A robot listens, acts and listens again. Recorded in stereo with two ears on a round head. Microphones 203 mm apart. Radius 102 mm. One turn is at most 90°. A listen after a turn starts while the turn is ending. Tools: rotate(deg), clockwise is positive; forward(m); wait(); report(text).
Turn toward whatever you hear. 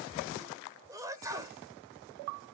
rotate(15)
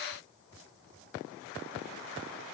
wait()
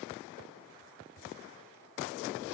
report("I heard a sneeze, but can't make it out now. It was about straight ahead or 150° right.")